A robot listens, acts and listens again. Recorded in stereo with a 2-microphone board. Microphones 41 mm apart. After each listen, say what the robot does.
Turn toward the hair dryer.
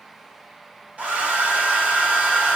Turn 35° right.
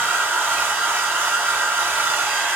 Turn 110° right.
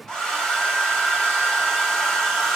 Turn 10° left.
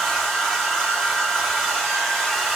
Facing the hair dryer.